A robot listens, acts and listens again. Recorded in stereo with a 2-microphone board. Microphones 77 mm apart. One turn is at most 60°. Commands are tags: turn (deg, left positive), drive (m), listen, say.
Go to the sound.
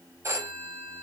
<turn deg="-40"/>
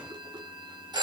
<turn deg="-60"/>
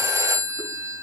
<turn deg="-40"/>
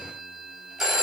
<drive m="1.0"/>
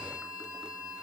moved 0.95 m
<listen/>
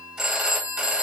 <drive m="1.0"/>
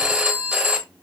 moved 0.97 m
<turn deg="-10"/>
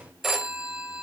<drive m="1.0"/>
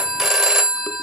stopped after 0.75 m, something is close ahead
<say>Arrived at the phone ringing, straight ahead.</say>